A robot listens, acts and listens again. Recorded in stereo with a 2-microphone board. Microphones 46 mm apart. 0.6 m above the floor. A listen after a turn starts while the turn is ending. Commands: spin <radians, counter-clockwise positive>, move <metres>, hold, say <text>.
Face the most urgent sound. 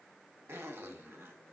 hold
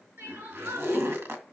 spin -1.57
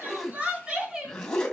spin -0.26
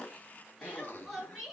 say Found it: crying, straight ahead, over 4 m away.